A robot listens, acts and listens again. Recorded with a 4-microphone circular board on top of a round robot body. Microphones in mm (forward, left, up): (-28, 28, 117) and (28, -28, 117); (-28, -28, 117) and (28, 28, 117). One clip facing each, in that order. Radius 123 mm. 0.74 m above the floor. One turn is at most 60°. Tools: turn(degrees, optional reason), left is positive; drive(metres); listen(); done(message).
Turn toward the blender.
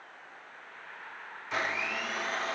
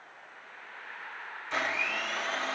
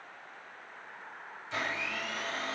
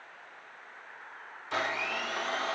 turn(degrees=50, reason="The blender: 50° left.")
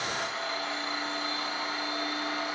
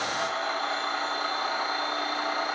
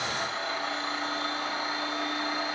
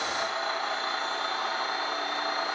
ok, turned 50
done("Facing the blender, 2 to 4 m away.")